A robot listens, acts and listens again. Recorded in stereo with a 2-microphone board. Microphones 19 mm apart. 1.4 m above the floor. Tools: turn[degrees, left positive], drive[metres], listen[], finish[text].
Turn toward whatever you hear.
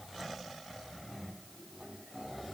Action: listen[]
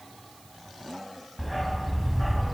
Action: turn[30]
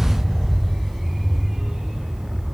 Thought: So it is at 40° right.
Action: turn[-40]
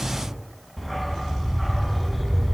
Action: finish[Facing the dog barking.]